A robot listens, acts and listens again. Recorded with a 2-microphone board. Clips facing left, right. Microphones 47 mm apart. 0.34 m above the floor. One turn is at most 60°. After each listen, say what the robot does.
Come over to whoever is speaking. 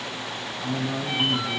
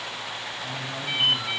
Turn 45° left.
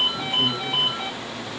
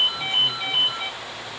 Keep listening.
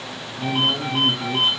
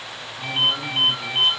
Turn 10° left.
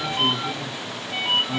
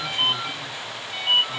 Keep listening.
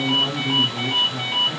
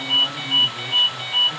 Drive 1.0 m forward.
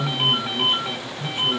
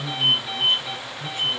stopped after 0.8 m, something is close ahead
Arrived at the man speaking, straight ahead.